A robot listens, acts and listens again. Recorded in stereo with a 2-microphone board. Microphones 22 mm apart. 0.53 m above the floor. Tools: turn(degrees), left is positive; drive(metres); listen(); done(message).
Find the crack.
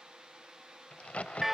turn(degrees=90)
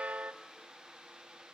done("I heard a crack from this way, but can't make it out now.")